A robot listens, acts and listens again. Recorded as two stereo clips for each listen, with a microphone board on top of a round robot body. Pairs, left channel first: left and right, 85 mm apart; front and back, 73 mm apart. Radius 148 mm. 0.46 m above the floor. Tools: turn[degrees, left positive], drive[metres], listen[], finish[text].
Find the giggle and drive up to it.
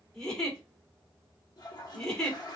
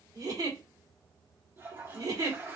Thought: The giggle: 170° left.
Action: turn[170]
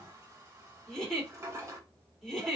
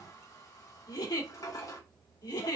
Action: drive[1.0]
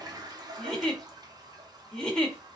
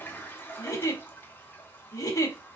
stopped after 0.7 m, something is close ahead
Thought: The giggle is now 10° left.
Action: turn[10]
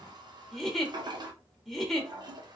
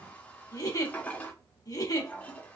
Action: finish[I am next to the giggle.]